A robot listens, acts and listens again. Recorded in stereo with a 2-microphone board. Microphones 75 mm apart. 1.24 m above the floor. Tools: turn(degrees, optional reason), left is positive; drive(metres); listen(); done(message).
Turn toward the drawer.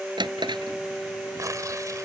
turn(degrees=-90)
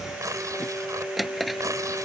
done("Facing the drawer.")